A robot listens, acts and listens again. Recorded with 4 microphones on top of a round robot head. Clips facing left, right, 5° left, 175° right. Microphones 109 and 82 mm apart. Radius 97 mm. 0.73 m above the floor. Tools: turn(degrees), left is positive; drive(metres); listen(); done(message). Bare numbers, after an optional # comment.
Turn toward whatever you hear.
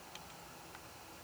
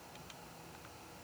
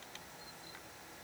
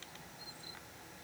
listen()
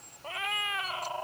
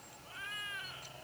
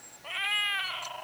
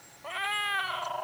# The cat meowing: 130° left.
turn(130)
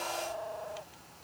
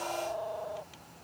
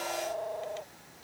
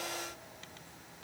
# The cat meowing is now 20° right.
turn(-20)
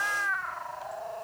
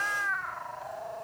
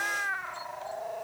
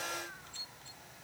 done("Facing the cat meowing.")